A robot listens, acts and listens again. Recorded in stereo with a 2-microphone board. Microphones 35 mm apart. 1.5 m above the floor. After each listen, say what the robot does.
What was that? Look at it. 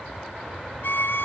Turn 65° left.
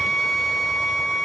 Found it: a violin, straight ahead, under 1 m away.